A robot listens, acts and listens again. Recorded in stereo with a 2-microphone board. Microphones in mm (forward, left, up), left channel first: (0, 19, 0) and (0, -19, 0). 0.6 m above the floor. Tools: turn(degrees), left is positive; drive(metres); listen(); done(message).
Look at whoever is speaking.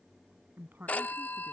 turn(degrees=-65)
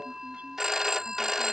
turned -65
listen()
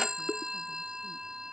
listen()
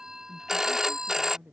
turn(degrees=-75)
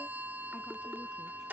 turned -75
listen()
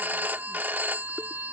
listen()
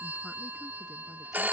done("I heard a woman speaking from this way, but can't make it out now.")